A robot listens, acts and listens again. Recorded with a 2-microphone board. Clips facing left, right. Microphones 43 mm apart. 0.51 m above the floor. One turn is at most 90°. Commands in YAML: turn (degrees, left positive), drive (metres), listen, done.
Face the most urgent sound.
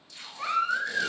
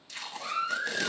turn: 70
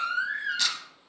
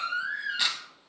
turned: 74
turn: 35
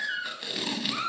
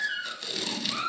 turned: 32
done: "Found it: a baby crying, straight ahead, 2 to 4 m away."